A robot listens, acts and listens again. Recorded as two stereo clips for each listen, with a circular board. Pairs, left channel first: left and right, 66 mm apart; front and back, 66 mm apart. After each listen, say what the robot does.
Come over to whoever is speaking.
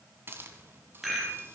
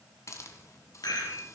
Keep listening.
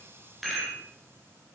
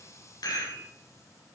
Keep listening.
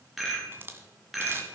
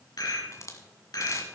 I can't make out anyone speaking, only a rattle and a hiss.